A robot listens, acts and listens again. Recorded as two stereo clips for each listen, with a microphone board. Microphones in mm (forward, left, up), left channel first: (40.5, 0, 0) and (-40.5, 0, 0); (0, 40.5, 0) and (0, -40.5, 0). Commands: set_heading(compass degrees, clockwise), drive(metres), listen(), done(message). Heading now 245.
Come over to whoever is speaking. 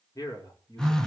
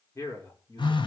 set_heading(205)
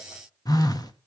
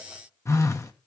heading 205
listen()
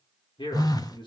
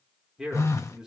drive(1.0)
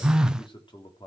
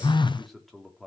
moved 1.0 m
drive(1.0)
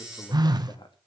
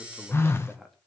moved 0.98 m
drive(1.0)
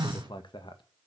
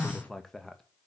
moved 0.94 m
drive(1.0)
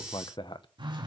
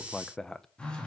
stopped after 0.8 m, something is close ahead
done("I am next to the man speaking.")